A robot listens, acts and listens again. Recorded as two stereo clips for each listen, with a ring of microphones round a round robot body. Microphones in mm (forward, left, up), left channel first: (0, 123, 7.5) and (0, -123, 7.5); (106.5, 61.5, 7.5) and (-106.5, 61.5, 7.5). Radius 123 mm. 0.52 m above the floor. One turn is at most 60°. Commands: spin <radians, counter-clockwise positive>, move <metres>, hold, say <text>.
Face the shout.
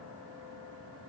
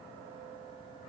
hold
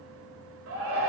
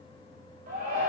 spin -1.05
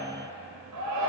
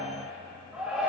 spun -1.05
spin -1.05
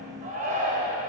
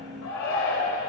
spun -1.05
spin -0.61
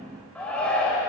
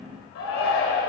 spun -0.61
say Found it: a shout, straight ahead.